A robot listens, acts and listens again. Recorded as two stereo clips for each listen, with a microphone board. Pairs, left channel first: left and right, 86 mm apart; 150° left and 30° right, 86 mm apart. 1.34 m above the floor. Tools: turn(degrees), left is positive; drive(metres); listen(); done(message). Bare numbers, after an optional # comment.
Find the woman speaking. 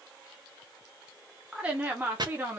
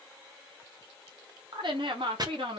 # The woman speaking: 25° right.
turn(-25)
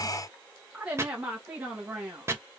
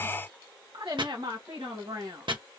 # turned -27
# The woman speaking is now 25° right.
turn(-25)
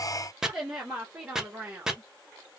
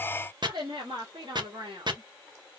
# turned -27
# The woman speaking is now 15° right.
turn(-15)
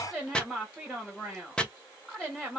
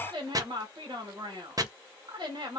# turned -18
done("Facing the woman speaking, 2 to 4 m away.")